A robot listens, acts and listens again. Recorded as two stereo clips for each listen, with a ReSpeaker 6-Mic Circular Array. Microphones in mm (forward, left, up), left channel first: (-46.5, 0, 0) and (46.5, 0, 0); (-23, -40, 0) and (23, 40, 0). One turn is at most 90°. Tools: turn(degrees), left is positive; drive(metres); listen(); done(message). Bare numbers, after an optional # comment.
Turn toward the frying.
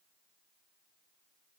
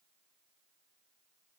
listen()
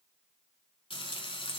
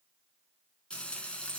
# The frying: 160° left.
turn(90)
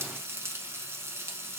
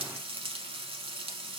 # The frying is now 60° left.
turn(60)
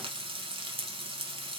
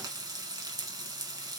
# The frying is now 15° left.
turn(15)
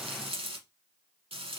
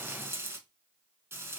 done("Found it: frying, straight ahead, under 1 m away.")